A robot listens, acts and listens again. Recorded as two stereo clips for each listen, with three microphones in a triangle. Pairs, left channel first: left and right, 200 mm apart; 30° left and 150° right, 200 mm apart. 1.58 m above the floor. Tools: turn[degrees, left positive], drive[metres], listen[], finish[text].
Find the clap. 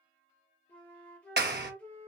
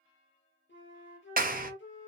Thought: The clap: 115° right.
Action: turn[-115]
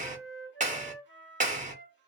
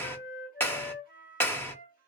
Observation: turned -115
Thought: The clap is now 50° right.
Action: turn[-50]
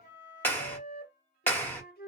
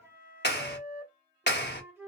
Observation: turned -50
Thought: The clap is now 10° left.
Action: turn[10]
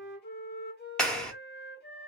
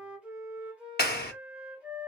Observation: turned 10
Action: finish[Found it: a clap, straight ahead.]